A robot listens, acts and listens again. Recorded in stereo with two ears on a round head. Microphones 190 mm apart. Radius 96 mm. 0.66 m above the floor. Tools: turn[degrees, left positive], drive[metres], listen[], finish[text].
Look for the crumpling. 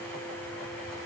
Action: listen[]
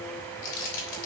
Thought: The crumpling: about 65° left or 115° left.
Action: turn[65]
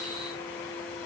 Action: listen[]
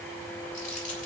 Action: listen[]
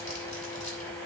Action: finish[I heard crumpling, but can't make it out now. It was about straight ahead or 50° left.]